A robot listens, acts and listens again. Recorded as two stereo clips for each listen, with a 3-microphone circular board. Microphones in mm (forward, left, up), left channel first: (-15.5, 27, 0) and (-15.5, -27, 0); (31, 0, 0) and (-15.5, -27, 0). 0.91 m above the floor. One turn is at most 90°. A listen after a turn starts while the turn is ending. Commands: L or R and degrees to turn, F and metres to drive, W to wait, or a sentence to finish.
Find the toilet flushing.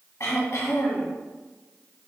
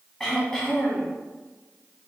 W
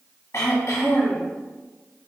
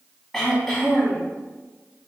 W
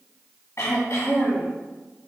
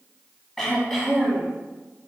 I can't make out a toilet flushing, only throat clearing.